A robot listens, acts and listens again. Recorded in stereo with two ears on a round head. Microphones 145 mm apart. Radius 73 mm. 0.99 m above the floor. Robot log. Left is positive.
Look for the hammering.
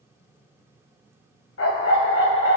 cmd idle
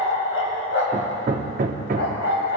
note: The hammering: about 55° right or 125° right.
cmd yaw -55
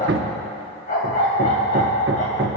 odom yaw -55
note: So it is at 70° right.
cmd yaw -70
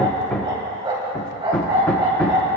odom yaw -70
note: The hammering is now 10° left.
cmd yaw +10
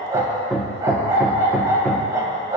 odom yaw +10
end: Found it: hammering, straight ahead.